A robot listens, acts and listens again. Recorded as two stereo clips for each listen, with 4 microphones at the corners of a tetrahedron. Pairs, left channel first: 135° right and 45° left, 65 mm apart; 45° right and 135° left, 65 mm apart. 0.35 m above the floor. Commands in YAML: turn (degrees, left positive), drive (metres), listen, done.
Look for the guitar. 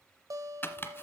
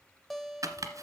turn: 45
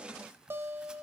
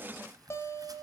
done: "Facing the guitar, 1 to 2 m away."